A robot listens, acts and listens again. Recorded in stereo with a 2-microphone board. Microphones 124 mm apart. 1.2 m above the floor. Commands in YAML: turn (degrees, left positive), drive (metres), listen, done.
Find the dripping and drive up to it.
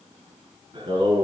listen: true
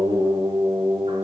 listen: true
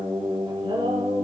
done: "I can't make out dripping, only singing."